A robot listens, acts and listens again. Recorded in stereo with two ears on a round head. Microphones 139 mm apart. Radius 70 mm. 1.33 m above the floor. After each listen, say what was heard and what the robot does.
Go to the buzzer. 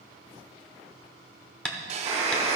The buzzer: about 25° right or 155° right. Turn 25° right.
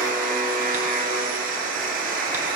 Drive 1.0 m forward.
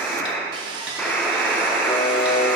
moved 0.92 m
The buzzer is now 10° left. Turn 10° left.
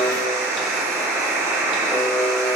Drive 1.0 m forward.
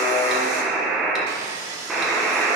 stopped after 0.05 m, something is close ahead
I am next to the buzzer.